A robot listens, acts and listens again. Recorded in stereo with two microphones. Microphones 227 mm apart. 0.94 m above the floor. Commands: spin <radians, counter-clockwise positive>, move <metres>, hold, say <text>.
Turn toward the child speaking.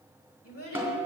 spin 1.57
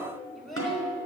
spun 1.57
say Found it: a child speaking, straight ahead.